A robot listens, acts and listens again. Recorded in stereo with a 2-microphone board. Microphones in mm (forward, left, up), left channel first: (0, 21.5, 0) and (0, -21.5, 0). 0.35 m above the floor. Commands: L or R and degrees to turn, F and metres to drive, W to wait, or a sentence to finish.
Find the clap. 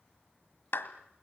L65
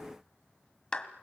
L25
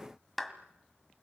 Facing the clap.